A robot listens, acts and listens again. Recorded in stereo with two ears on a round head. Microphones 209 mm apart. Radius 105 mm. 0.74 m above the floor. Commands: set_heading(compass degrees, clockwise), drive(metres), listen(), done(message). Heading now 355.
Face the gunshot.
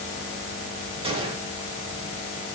set_heading(20)
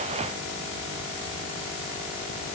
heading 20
listen()
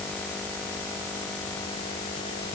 done("I heard a gunshot, but can't make it out now. It was about straight ahead or 130° right.")